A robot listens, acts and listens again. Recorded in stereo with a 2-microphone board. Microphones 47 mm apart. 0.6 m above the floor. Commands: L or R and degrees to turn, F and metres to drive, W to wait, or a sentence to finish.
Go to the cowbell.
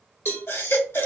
L50
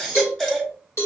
L75
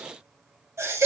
W
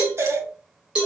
R20
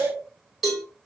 F1.0
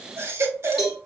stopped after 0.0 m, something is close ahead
Something is in my way. I am facing the cowbell but have not reached it.